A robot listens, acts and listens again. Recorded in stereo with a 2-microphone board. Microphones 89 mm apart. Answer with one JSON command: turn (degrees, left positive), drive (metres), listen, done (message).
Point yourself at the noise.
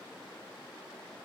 {"listen": true}
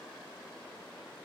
{"listen": true}
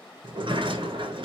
{"turn": -70}
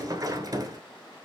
{"turn": -40}
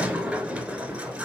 {"turn": -15}
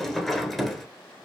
{"done": "Found it: a sliding door, straight ahead."}